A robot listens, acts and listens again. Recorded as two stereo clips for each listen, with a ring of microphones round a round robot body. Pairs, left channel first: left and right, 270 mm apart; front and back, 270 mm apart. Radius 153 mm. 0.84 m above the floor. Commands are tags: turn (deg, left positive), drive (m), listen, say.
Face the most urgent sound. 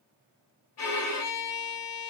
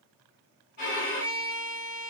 <listen/>
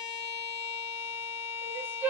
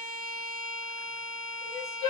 <say>Found it: crying, straight ahead.</say>